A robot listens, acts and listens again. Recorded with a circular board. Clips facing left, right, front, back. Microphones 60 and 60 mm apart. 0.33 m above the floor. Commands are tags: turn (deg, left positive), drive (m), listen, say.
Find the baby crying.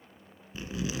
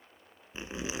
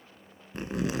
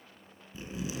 <listen/>
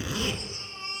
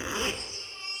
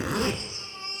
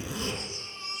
<turn deg="45"/>
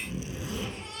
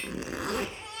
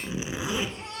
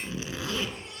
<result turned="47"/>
<say>Facing the baby crying, over 4 m away.</say>